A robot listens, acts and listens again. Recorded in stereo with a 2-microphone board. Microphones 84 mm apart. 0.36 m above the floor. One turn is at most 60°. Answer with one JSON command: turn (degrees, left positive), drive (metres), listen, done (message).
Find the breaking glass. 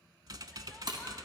{"turn": -60}
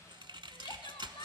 {"listen": true}
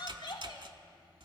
{"done": "I heard breaking glass, but can't make it out now. It was about straight ahead or 60° right."}